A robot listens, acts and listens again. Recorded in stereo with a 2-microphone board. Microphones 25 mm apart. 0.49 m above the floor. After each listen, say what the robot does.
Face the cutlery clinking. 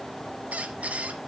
Keep listening.
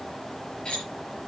Turn 35° left.
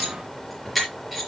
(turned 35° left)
Found it: cutlery clinking, straight ahead.